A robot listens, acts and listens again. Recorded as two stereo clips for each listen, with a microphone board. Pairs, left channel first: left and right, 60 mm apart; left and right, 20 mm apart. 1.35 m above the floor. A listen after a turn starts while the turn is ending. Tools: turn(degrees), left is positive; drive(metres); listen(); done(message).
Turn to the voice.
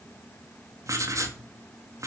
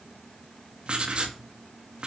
listen()
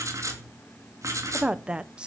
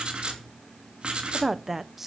turn(degrees=-15)
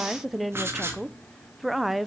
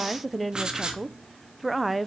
done("Facing the woman speaking.")